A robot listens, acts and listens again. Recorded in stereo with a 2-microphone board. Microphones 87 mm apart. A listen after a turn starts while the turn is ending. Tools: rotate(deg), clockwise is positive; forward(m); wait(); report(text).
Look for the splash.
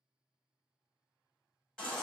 wait()
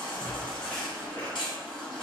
rotate(65)
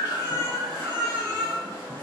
wait()
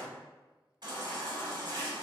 report("I heard a splash, but can't make it out now. It was about straight ahead or 50° right.")